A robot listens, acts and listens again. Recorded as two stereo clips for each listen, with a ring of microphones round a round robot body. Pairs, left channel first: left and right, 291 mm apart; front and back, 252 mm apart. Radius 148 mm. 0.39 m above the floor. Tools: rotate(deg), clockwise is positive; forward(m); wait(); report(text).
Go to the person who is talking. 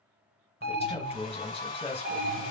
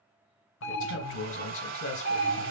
rotate(-20)
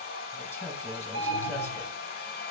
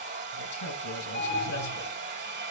wait()
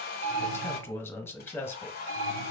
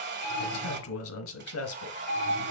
rotate(-10)
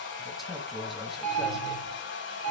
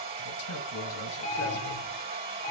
forward(1.0)
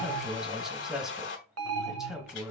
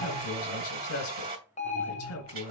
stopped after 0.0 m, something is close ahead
report("Something is in my way. I am facing the man speaking but have not reached it.")